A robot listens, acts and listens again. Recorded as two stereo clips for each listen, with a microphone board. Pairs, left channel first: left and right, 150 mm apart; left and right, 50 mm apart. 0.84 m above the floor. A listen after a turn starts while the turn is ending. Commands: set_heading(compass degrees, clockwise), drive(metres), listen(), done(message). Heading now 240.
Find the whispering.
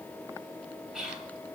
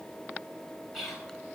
set_heading(270)
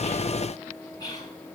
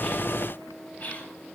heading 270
set_heading(240)
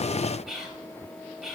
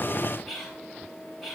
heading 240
done("Facing the whispering.")